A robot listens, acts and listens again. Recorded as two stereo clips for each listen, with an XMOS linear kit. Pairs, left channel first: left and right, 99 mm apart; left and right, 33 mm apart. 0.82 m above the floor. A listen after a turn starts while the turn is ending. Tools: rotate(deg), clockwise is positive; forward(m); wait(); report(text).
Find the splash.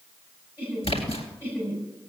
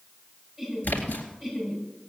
rotate(-75)
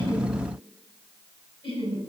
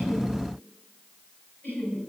wait()
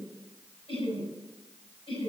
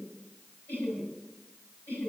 report("I heard a splash, but can't make it out now. It was about straight ahead or 30° left.")